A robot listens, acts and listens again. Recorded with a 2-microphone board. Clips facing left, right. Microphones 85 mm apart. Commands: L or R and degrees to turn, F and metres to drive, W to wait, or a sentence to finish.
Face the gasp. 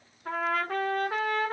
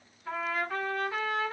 W
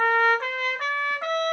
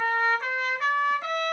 W
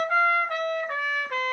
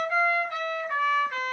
I can't make out a gasp, only a trumpet.